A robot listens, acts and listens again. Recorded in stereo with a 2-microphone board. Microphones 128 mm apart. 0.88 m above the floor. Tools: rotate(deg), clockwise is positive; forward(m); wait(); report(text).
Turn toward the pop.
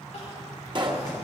rotate(40)
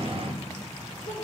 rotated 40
wait()
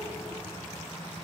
report("I heard a pop, but can't make it out now. It was about straight ahead or 100° right.")